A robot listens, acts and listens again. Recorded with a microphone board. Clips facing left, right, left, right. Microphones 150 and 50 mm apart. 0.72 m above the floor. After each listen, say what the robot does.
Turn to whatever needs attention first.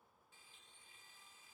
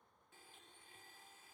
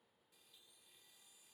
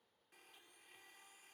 Keep listening.
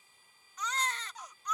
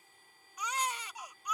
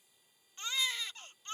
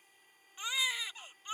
Turn 30° right.
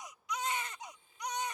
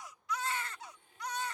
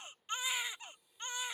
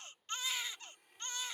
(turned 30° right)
Turn 20° left.
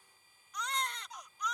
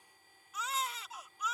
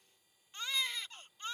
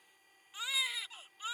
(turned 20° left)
Facing the baby crying.